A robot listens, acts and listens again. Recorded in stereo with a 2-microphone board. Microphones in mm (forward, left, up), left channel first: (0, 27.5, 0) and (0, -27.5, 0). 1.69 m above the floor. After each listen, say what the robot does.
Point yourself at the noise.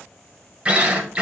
Turn 20° right.
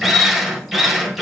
Facing the drill.